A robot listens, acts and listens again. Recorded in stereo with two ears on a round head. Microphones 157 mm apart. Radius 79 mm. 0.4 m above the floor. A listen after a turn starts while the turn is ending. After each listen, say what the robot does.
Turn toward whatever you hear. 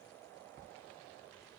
Keep listening.
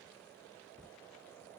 Keep listening.
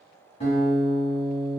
Turn 35° left.
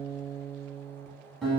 Facing the guitar.